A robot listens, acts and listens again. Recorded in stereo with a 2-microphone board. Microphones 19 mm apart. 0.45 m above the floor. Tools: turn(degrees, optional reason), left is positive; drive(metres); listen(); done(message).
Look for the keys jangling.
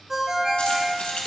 turn(degrees=90)
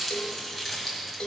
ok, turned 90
turn(degrees=15, reason="So it is at 15° left.")
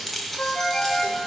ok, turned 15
turn(degrees=10, reason="The keys jangling is now 10° left.")
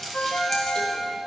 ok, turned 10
turn(degrees=15, reason="The keys jangling is now 15° left.")
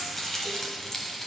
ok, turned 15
turn(degrees=25, reason="The keys jangling is now 25° left.")
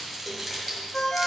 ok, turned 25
done("Facing the keys jangling.")